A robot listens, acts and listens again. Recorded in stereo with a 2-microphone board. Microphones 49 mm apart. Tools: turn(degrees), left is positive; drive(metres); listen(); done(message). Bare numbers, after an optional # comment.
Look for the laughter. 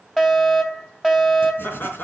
# The laughter: about 40° left or 140° left.
turn(40)
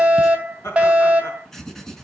# So it is at 105° left.
turn(105)
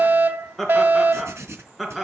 # The laughter is now 10° right.
turn(-10)
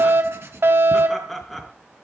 done("Found it: laughter, straight ahead.")